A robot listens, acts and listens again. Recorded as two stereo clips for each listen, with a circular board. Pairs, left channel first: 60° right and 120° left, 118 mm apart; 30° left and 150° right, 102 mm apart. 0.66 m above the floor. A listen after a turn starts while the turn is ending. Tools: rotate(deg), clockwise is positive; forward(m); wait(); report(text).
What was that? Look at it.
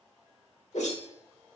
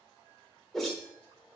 rotate(55)
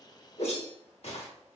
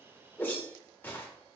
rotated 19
rotate(35)
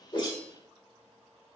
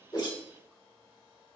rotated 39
wait()
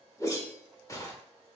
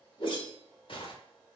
report("Found it: a whoosh, straight ahead, 1 to 2 m away.")